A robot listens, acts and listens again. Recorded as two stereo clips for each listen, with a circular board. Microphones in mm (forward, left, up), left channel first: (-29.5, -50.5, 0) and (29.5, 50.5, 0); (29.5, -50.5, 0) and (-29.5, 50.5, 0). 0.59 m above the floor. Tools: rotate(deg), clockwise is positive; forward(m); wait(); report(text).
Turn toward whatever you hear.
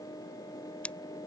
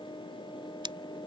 rotate(-160)
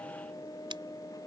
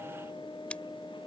wait()
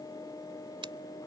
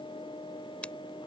rotate(-20)
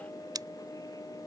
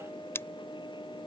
rotate(-10)
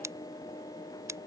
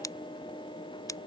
report("Facing the scissors.")